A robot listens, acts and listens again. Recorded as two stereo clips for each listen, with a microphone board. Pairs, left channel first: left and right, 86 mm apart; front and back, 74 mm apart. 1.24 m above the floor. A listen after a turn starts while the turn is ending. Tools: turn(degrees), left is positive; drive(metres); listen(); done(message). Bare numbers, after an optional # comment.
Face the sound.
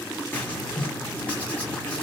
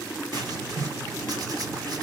# The writing: 160° left.
turn(160)
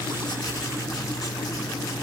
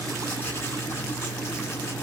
# The writing is now 50° left.
turn(50)
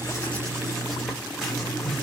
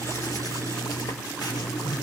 done("Found it: writing, straight ahead.")